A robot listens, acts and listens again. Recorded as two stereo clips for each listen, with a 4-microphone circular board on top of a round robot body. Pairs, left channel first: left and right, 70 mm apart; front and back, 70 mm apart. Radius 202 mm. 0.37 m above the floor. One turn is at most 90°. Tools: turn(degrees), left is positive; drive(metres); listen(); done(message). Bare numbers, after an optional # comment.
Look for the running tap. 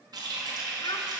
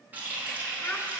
# The running tap: 110° right.
turn(-90)
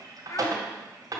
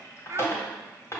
# The running tap is now 55° right.
turn(-55)
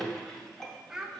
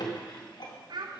done("Found it: a running tap, straight ahead, 2 to 4 m away.")